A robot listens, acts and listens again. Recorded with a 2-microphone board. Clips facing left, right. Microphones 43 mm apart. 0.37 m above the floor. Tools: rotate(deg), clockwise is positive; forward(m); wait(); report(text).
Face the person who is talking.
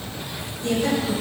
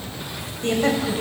rotate(50)
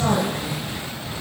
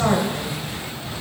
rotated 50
rotate(30)
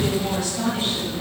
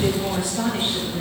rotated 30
rotate(30)
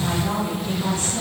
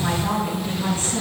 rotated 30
rotate(30)
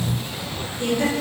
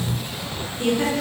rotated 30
rotate(15)
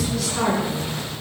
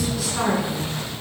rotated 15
report("Facing the woman speaking, 2 to 4 m away.")